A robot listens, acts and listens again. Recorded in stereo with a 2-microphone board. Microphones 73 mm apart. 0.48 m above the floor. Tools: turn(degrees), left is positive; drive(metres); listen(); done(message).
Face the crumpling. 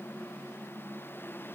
listen()
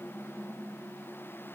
listen()
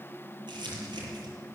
turn(degrees=-90)
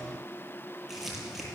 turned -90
done("Found it: crumpling, straight ahead, over 4 m away.")